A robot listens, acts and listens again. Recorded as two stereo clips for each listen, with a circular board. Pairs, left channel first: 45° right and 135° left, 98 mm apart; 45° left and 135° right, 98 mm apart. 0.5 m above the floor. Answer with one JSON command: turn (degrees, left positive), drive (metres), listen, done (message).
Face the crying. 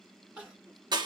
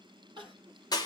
{"turn": -160}
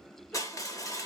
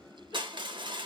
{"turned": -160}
{"listen": true}
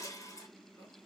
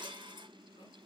{"listen": true}
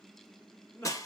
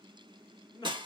{"turn": 10}
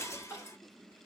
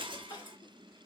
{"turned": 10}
{"done": "Found it: crying, straight ahead."}